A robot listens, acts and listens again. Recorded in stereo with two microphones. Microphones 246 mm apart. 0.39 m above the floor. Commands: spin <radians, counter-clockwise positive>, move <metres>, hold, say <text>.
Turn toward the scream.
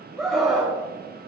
spin 0.52
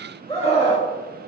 spin 2.71
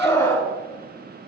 spin 0.26
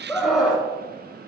say Facing the scream, 2 to 4 m away.